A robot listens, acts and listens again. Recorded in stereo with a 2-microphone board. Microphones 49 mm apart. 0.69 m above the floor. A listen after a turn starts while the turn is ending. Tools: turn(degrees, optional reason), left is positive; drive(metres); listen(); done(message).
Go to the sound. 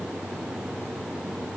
listen()
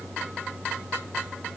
listen()
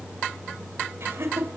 turn(degrees=-55, reason="The laughter: about 55° right or 125° right.")
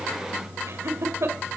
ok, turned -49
turn(degrees=-70, reason="So it is at 70° right.")
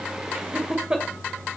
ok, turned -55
turn(degrees=-15, reason="The laughter is now 15° right.")
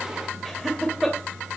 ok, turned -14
drive(metres=1.0)
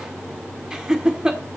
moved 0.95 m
turn(degrees=-15, reason="The laughter is now 15° right.")
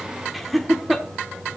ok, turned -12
drive(metres=1.0)
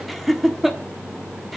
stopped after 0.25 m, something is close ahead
done("I am next to the laughter.")